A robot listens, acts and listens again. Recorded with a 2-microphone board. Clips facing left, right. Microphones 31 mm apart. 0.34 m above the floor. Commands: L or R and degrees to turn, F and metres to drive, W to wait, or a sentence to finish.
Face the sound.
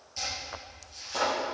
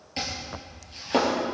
R55
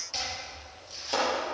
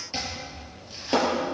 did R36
R20
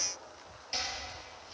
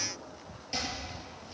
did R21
Found it: chopping, straight ahead.